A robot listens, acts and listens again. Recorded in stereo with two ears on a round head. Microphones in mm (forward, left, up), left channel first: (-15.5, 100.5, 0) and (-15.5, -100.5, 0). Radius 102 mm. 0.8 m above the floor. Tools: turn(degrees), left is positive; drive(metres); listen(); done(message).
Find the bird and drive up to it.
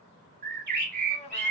turn(degrees=-45)
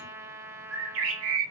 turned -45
turn(degrees=-80)
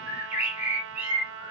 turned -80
turn(degrees=-10)
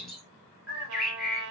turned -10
drive(metres=1.0)
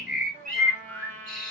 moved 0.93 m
drive(metres=1.0)
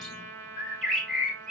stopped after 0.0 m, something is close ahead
done("Arrived at the bird, straight ahead.")